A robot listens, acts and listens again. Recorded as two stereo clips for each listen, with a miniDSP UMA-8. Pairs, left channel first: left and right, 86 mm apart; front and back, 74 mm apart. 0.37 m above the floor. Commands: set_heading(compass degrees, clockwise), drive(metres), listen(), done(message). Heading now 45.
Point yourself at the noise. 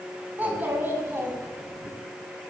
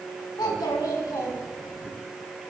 set_heading(85)
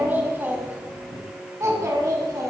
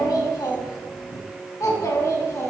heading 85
set_heading(135)
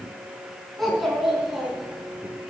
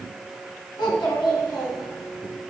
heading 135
done("Facing the child speaking.")